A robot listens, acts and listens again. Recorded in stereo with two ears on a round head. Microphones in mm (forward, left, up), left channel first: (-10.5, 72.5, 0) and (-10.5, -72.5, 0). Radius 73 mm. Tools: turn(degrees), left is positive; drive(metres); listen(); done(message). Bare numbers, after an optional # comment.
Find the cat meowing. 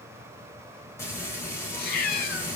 # The cat meowing: about 65° left or 115° left.
turn(65)
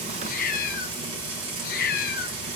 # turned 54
# So it is at 65° left.
turn(65)
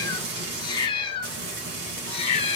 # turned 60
# The cat meowing is now 40° left.
turn(40)
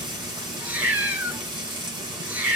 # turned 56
# The cat meowing is now 10° right.
turn(-10)
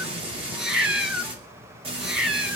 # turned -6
done("Facing the cat meowing.")